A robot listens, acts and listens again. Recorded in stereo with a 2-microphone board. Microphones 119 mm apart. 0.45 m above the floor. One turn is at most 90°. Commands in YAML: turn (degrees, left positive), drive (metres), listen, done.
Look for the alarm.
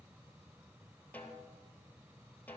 listen: true
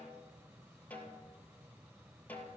listen: true
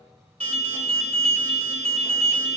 turn: -60
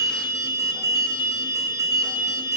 turn: -35
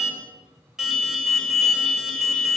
done: "Facing the alarm, 2 to 4 m away."